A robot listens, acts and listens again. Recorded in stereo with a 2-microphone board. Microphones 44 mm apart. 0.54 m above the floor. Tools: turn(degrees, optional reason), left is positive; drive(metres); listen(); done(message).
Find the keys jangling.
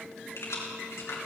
turn(degrees=90)
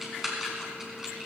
turn(degrees=-15, reason="So it is at 15° right.")
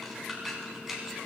done("Found it: keys jangling, straight ahead, 2 to 4 m away.")